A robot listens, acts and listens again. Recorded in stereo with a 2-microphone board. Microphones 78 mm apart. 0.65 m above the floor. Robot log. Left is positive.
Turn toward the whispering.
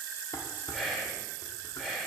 cmd yaw +30
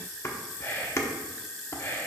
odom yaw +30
note: So it is at 145° left.
cmd yaw +145
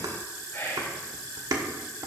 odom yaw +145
note: The whispering is now 30° left.
cmd yaw +30
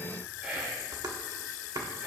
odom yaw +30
note: The whispering is now 15° right.
cmd yaw -15
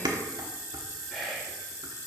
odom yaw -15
end: Found it: whispering, straight ahead.